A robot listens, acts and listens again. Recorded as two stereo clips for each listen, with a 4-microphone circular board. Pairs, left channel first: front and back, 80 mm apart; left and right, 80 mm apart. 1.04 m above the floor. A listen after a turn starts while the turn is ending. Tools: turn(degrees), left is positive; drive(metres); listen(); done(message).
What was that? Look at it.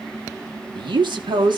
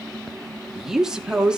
turn(degrees=-170)
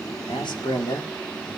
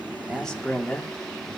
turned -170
turn(degrees=15)
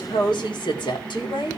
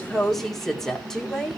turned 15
done("Facing the woman speaking.")